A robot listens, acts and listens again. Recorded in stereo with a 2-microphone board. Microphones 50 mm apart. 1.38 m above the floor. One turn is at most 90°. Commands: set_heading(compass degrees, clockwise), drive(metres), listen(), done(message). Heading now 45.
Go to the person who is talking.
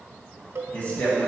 set_heading(15)
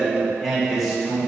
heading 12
drive(1.0)
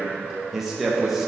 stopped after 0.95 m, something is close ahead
done("I am next to the man speaking.")